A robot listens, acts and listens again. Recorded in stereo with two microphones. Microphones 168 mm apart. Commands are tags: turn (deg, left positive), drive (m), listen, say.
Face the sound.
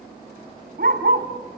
<turn deg="-70"/>
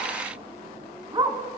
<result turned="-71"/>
<turn deg="-25"/>
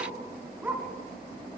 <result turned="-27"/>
<turn deg="-10"/>
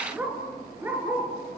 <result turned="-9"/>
<turn deg="-15"/>
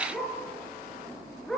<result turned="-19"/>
<say>Found it: a dog barking, straight ahead, over 4 m away.</say>